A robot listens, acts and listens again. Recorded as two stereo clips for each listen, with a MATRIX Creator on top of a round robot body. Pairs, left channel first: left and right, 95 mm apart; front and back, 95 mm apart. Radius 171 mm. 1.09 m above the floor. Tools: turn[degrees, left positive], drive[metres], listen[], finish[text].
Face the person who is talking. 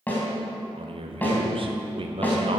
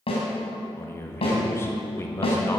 Thought: The man speaking: 65° right.
Action: turn[-65]
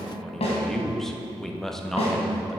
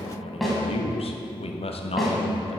Action: finish[Found it: a man speaking, straight ahead, 1 to 2 m away.]